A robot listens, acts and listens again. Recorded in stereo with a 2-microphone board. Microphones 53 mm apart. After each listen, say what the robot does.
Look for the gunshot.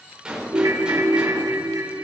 Turn 15° right.
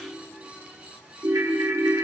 Keep listening.
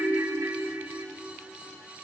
I heard a gunshot, but can't make it out now. It was about straight ahead or 150° right.